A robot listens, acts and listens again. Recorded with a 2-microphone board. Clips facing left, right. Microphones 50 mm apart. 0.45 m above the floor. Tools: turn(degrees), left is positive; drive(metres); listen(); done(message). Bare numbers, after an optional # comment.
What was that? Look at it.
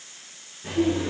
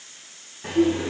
# The laughter: about 70° right or 110° right.
turn(-70)
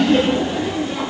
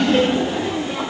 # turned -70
# So it is at 15° right.
turn(-15)
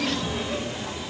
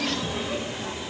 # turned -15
# The laughter is now 15° right.
turn(-15)
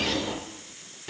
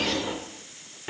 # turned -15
# The laughter is now 30° right.
turn(-30)
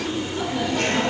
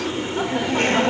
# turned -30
# The laughter is now 35° right.
turn(-35)
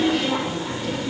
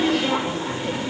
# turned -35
# The laughter is now 15° right.
turn(-15)
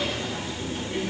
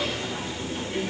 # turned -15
done("Found it: laughter, straight ahead, 1 to 2 m away.")